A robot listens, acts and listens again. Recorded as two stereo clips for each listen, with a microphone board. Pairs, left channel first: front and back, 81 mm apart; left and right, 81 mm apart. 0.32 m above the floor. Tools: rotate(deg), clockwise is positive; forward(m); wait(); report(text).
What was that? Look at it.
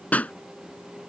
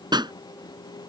rotate(70)
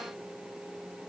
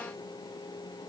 report("Facing where the pop came from. I can't hear it now.")